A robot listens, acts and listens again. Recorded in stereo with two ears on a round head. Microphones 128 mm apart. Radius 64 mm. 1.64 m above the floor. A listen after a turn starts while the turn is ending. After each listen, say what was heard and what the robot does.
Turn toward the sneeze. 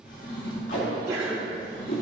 The sneeze: about 20° right or 160° right. Turn 20° right.
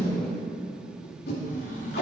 Keep listening.
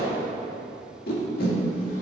I heard a sneeze, but can't make it out now. It was about straight ahead or 140° right.